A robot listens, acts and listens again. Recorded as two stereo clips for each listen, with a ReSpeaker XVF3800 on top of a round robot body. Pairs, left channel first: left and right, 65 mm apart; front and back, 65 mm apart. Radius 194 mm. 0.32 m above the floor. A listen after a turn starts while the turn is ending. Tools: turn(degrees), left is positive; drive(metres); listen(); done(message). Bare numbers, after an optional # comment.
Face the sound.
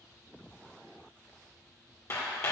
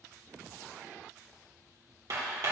# The hammering: 140° left.
turn(140)
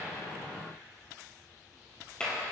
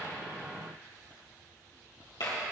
# The hammering is now 15° left.
turn(15)
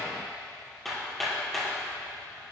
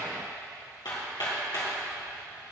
done("Found it: hammering, straight ahead, 2 to 4 m away.")